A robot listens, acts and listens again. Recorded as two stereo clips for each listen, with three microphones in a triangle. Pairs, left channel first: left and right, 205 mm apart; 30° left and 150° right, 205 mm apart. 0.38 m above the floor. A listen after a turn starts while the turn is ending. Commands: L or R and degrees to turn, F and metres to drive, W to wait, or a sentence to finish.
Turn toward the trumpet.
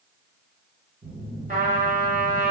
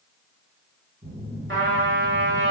R135
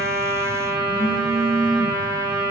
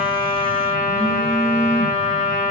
R20
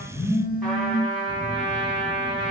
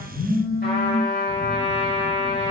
Facing the trumpet, 1 to 2 m away.